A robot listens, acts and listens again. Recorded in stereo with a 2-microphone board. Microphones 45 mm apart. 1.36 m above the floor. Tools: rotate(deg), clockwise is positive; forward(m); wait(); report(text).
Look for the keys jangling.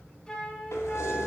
rotate(-90)
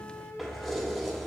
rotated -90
report("Facing the keys jangling, over 4 m away.")